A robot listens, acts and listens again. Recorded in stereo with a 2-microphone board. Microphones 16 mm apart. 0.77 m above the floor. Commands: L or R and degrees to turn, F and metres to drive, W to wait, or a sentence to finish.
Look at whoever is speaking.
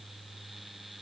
W
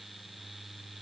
W
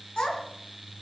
L90
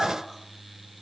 W
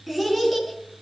R15
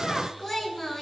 Found it: a child speaking, straight ahead.